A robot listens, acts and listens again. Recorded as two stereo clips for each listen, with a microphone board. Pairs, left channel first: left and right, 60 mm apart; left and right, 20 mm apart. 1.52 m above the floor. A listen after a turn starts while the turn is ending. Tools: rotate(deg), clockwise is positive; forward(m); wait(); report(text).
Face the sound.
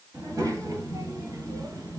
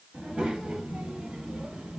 rotate(70)
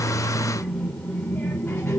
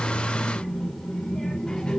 rotate(-45)
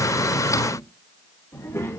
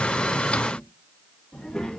rotate(-50)
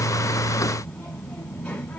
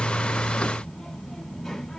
rotate(-20)
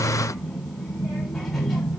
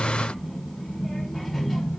rotate(-10)
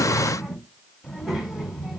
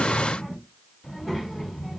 report("Found it: a child speaking, straight ahead.")